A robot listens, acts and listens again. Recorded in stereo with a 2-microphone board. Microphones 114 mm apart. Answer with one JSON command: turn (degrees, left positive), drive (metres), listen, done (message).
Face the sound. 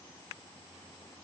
{"listen": true}
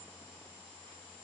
{"listen": true}
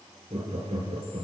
{"turn": -90}
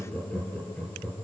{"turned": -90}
{"turn": 10}
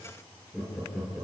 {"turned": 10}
{"done": "Facing the laughter."}